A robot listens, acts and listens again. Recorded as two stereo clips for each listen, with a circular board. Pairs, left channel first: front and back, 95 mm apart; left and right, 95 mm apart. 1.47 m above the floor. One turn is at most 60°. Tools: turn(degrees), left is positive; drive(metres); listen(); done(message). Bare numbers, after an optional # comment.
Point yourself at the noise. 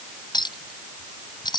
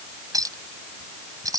# The clink: 40° right.
turn(-40)
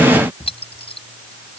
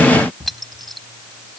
done("Found it: a clink, straight ahead.")